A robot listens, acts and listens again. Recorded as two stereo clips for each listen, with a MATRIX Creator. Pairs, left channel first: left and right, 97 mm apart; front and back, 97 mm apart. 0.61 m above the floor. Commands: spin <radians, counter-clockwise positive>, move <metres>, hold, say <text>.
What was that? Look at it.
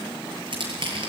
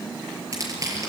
spin -2.18
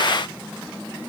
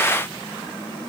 hold
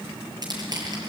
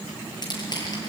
spin -0.79
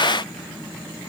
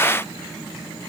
hold
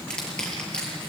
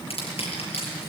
spin 0.17
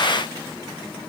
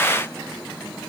hold
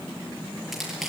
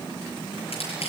say Facing the crushing.